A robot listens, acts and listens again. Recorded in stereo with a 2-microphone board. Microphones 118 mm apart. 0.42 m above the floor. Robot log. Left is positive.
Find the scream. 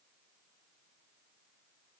cmd idle
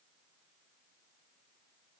cmd idle
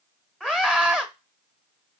cmd yaw -30
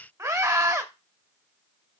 note: So it is at 145° right.
cmd yaw -145
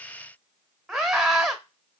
end: Facing the scream.